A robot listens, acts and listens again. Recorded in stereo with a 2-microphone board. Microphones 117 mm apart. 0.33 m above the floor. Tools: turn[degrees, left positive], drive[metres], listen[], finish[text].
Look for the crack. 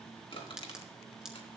Action: turn[-30]
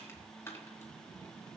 Action: listen[]
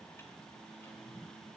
Action: finish[I heard a crack, but can't make it out now. It was about 25° left or 145° right.]